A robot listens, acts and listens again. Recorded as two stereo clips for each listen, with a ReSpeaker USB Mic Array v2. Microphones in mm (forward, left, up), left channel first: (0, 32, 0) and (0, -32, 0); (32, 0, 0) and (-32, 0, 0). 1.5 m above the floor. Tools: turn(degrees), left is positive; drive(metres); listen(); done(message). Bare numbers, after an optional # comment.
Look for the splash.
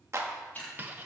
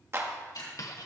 # The splash: 25° left.
turn(25)
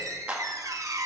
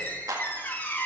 done("I heard a splash from this way, but can't make it out now.")